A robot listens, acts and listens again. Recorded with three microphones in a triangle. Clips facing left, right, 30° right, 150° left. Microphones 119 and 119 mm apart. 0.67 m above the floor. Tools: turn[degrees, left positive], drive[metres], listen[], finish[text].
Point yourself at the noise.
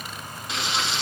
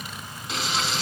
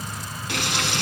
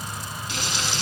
Action: finish[Facing the frying.]